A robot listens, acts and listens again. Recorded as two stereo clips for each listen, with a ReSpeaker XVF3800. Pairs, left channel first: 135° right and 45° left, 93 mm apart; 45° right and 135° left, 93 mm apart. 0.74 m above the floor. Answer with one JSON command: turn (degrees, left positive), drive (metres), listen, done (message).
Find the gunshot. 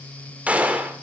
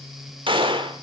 {"turn": 120}
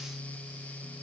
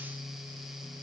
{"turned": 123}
{"done": "I heard a gunshot from this way, but can't make it out now."}